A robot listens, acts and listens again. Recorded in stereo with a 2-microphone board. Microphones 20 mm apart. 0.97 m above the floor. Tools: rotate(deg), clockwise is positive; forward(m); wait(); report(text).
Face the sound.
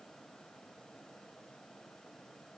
wait()
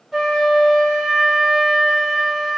rotate(30)
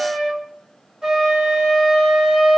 rotate(140)
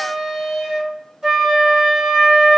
rotate(50)
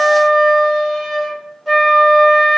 rotate(10)
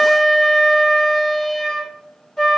report("Found it: a flute, straight ahead, 1 to 2 m away.")